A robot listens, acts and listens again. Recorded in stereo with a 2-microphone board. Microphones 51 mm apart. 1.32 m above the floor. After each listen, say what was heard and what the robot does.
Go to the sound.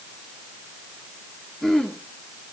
Turn 30° left.
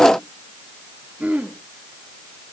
So it is at 25° right. Turn 25° right.
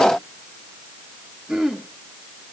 The throat clearing is now 10° right. Turn 10° right.
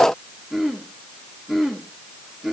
Drive 1.0 m forward.
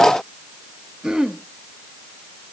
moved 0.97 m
The throat clearing is now 15° right. Turn 15° right.
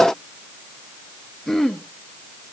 Drive 1.0 m forward.
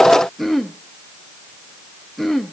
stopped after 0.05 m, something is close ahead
I am next to the throat clearing.